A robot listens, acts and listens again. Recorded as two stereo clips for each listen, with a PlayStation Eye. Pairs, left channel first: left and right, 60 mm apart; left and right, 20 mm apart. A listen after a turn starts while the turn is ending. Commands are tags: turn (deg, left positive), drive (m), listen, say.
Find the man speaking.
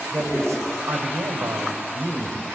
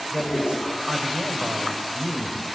<turn deg="-55"/>
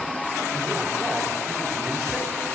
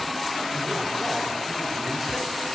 <listen/>
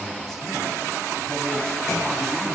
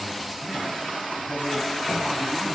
<listen/>
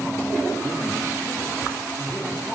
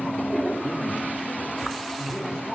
<turn deg="10"/>
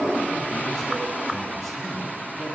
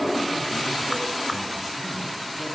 <listen/>
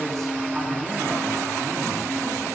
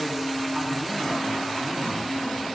<say>Found it: a man speaking, straight ahead.</say>